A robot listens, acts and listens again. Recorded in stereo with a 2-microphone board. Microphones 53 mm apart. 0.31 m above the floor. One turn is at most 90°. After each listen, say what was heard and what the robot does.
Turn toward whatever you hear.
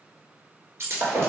The breaking glass: about 50° right or 130° right. Turn 50° right.
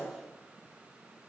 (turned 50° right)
Keep listening.
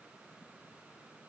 I heard breaking glass, but can't make it out now. It was about straight ahead or 80° right.